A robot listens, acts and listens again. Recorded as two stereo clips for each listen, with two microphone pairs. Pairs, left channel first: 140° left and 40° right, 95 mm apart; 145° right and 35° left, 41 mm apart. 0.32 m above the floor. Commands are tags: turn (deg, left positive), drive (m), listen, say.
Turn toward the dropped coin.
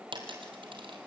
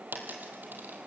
<say>Found it: a dropped coin, straight ahead.</say>